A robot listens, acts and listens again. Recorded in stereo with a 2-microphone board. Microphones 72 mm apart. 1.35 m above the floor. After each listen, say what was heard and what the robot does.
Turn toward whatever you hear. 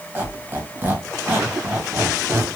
The squeak: about 25° right or 155° right. Turn 25° right.
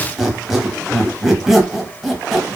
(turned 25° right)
Found it: a squeak, straight ahead, under 1 m away.